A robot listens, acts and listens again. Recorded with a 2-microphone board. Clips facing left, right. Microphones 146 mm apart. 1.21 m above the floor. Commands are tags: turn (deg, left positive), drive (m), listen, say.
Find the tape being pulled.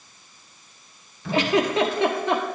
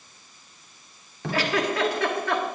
<turn deg="-90"/>
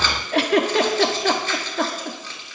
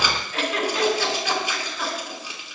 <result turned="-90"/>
<turn deg="-15"/>
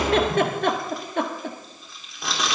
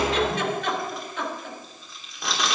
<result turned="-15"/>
<say>Found it: tape being pulled, straight ahead.</say>